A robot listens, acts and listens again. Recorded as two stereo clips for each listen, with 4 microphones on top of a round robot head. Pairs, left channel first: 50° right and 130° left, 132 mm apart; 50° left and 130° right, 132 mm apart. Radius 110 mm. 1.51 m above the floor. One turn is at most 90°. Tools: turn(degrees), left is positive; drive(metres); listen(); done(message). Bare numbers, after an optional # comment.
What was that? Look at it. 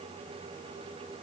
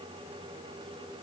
listen()
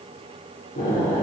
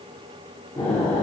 # The explosion: 25° right.
turn(-25)
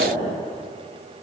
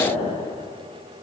done("Facing the explosion.")